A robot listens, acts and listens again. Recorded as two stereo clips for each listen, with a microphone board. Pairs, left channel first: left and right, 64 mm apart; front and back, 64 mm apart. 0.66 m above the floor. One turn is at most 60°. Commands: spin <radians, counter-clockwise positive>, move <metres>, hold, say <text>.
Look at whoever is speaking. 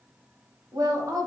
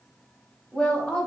spin -1.05
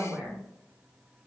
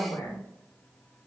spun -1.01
spin -0.26
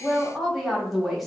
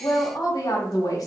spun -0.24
say Facing the woman speaking, 1 to 2 m away.